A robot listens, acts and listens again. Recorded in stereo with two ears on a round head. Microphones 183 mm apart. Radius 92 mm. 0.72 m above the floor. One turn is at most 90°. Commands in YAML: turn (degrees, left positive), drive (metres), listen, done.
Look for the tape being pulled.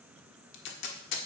turn: 60
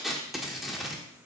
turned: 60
done: "Found it: tape being pulled, straight ahead."